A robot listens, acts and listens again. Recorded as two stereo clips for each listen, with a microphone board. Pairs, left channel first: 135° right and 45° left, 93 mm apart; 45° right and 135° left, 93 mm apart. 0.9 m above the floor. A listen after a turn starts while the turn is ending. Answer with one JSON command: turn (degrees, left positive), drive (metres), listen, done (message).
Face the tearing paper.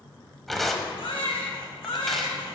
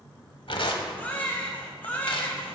{"turn": -45}
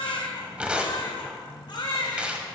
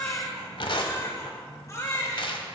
{"turn": -30}
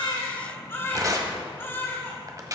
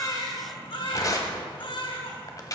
{"done": "Found it: tearing paper, straight ahead."}